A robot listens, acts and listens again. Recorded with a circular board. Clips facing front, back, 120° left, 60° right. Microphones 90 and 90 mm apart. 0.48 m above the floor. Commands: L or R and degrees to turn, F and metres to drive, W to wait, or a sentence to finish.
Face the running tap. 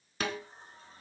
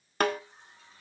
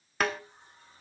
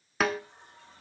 R50
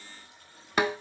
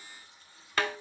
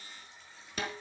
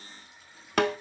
L25
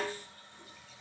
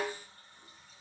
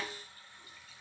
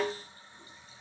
Facing the running tap, over 4 m away.